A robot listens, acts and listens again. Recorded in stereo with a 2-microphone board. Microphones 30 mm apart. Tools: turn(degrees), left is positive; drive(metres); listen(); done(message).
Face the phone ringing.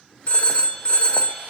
turn(degrees=45)
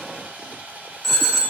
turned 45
turn(degrees=10)
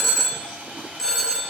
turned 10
done("Found it: a phone ringing, straight ahead, 1 to 2 m away.")